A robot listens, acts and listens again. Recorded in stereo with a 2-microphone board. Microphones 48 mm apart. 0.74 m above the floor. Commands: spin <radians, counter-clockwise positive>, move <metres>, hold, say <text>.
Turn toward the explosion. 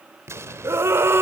spin -1.31
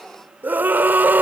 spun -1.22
hold
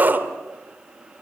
say I heard an explosion, but can't make it out now. It was about 5° right or 35° right.